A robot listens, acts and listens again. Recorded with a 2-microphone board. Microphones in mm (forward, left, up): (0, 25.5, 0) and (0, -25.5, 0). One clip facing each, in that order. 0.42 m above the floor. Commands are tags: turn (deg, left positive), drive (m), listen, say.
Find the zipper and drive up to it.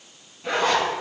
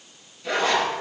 <turn deg="30"/>
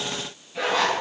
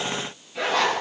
<drive m="1.0"/>
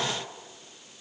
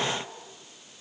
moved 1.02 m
<listen/>
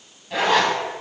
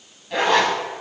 <drive m="1.0"/>
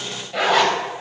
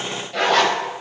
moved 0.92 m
<turn deg="10"/>
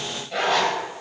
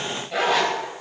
<drive m="1.0"/>
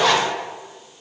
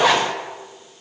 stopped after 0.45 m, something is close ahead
<turn deg="-10"/>
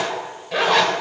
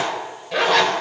<say>I am next to the zipper.</say>